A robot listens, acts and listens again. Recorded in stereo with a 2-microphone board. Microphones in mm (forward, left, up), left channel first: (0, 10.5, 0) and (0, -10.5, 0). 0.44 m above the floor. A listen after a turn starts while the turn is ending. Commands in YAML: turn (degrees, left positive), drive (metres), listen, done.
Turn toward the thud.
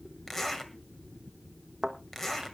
turn: -25
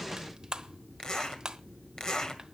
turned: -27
listen: true
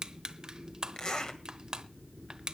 done: "I heard a thud, but can't make it out now. It was about 5° left or 130° right."